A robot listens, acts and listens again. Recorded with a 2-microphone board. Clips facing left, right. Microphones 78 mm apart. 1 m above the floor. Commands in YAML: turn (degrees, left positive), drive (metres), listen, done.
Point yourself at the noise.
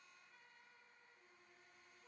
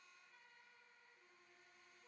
listen: true
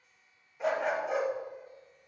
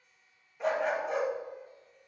turn: 30
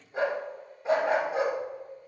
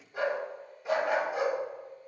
turn: 145
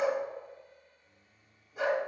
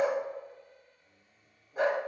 turn: -45
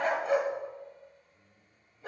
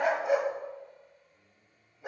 turn: -15
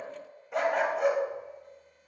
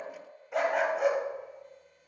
done: "Facing the dog barking, 1 to 2 m away."